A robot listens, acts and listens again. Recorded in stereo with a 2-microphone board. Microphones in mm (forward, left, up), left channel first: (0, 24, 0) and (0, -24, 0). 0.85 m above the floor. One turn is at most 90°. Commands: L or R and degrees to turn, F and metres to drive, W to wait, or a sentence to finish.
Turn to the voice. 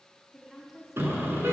L30
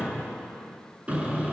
W
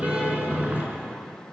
W
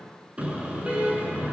I heard a woman speaking, but can't make it out now. It was about 30° right or 150° left.